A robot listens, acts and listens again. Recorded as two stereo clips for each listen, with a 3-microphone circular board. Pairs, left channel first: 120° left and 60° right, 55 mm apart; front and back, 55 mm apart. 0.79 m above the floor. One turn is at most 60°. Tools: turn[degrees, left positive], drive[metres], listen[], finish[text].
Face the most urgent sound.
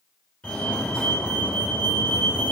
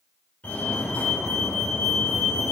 Thought: The fire alarm: 50° left.
Action: turn[50]
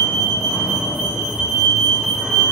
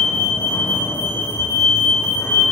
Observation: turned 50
Thought: The fire alarm is now 15° left.
Action: turn[15]
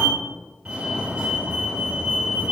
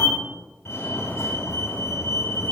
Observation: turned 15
Action: finish[Facing the fire alarm, 2 to 4 m away.]